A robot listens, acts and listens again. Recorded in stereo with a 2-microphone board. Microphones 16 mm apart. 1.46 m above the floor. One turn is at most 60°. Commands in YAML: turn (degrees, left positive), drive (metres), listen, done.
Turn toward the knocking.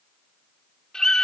listen: true
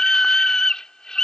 listen: true
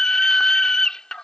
done: "I can't make out knocking, only a scream."